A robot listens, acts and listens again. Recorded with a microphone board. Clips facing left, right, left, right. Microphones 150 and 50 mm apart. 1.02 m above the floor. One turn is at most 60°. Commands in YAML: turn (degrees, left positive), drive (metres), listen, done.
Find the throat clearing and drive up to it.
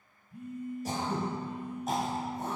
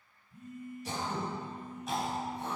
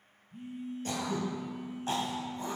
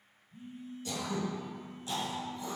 turn: 45
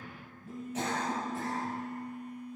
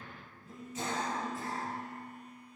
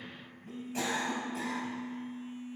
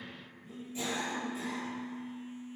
turn: 60
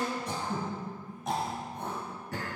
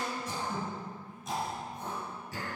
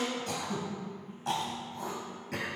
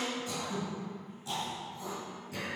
turn: 60
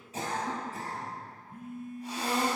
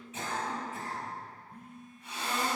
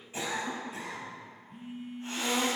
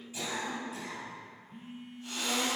turn: 40
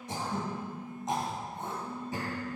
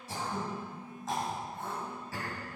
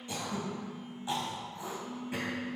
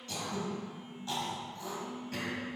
turn: 20
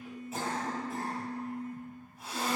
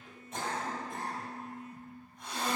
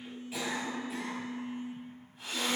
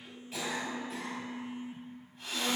drive: 1.0
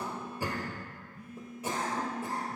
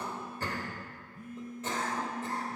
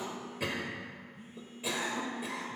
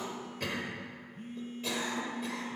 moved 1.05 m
turn: 10
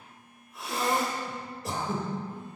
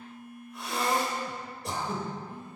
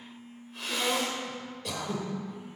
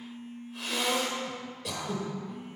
drive: 1.0
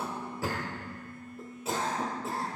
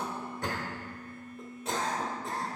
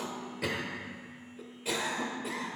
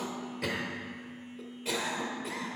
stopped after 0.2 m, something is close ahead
done: "Arrived at the throat clearing, straight ahead."